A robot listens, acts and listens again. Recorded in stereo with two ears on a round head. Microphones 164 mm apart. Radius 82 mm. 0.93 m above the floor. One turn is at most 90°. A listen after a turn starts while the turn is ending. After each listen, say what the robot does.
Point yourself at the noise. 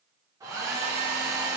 Turn 20° right.
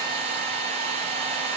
Turn 90° right.
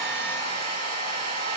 Turn 60° right.
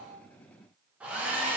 Turn 10° right.
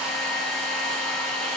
Facing the hair dryer, 1 to 2 m away.